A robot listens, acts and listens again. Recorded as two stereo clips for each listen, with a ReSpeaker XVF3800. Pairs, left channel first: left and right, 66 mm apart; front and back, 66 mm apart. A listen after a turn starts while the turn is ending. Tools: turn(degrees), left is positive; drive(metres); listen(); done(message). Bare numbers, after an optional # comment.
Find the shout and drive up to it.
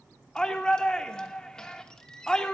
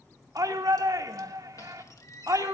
# The shout: 165° left.
turn(165)
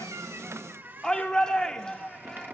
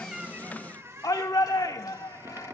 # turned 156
# The shout is now 10° left.
turn(10)
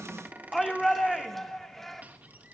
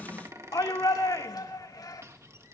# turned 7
drive(1.0)
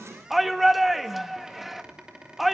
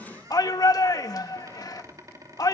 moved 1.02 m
drive(1.0)
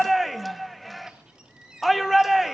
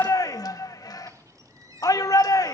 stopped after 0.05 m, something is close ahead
done("I am next to the shout.")